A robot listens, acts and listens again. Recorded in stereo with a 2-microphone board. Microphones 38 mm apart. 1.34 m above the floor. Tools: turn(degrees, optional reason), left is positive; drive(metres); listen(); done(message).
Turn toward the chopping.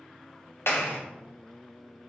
listen()
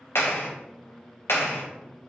listen()
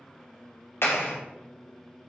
done("I can't make out chopping, only a clap.")